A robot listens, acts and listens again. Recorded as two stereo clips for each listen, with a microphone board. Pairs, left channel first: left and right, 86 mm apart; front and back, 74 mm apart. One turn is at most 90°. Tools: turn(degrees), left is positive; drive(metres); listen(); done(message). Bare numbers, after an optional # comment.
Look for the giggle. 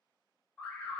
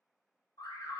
listen()
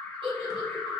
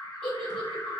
# The giggle: 80° right.
turn(-80)
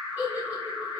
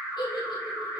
# The giggle is now 20° right.
turn(-20)
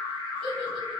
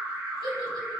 listen()
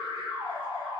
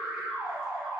listen()
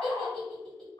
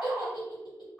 done("Found it: a giggle, straight ahead.")